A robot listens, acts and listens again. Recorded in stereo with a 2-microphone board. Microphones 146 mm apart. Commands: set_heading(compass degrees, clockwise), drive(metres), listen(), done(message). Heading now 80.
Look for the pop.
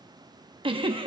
listen()
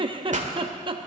set_heading(135)
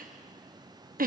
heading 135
listen()
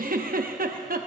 done("I heard a pop, but can't make it out now. It was about straight ahead or 70° right.")